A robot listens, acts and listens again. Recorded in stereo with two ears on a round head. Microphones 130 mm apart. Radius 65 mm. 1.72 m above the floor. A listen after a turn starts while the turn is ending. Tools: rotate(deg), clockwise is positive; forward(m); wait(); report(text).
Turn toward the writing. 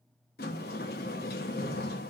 wait()
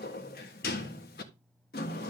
wait()
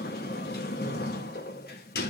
report("I can't make out writing to turn to.")